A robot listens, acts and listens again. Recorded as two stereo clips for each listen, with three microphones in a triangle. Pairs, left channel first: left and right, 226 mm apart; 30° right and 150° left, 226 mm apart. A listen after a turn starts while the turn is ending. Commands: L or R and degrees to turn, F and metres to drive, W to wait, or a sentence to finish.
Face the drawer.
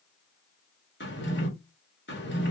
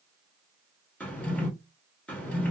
L55
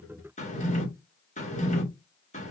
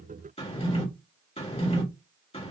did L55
L30
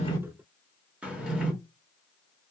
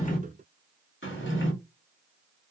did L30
Facing the drawer.